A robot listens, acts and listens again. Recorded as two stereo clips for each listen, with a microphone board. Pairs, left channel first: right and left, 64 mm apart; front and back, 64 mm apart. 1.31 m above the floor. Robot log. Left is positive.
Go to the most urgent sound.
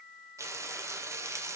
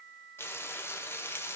cmd idle
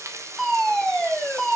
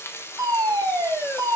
note: The fire alarm: 175° right.
cmd yaw -175
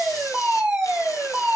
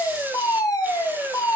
note: The fire alarm is now 15° left.
cmd yaw +15
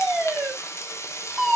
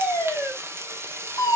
cmd fwd 1.0
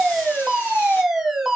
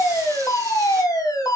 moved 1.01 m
note: The fire alarm is now 10° left.
cmd yaw +10
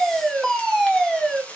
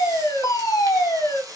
cmd fwd 1.0
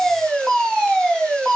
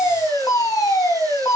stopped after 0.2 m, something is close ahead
end: Something is in my way. I am facing the fire alarm but have not reached it.